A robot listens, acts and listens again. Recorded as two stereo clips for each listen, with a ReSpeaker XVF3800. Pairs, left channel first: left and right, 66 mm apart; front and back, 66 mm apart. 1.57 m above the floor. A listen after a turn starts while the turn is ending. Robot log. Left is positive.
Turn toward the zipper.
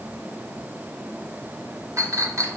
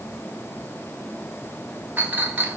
cmd idle
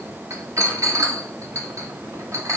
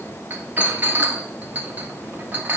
cmd idle
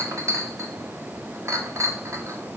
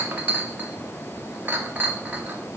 end: I can't make out a zipper to turn to.